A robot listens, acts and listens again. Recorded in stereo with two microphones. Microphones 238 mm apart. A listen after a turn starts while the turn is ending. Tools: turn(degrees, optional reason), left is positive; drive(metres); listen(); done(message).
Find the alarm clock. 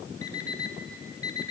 turn(degrees=70, reason="The alarm clock: about 70° left or 110° left.")
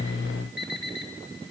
turn(degrees=40, reason="So it is at 40° left.")
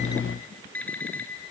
done("Facing the alarm clock.")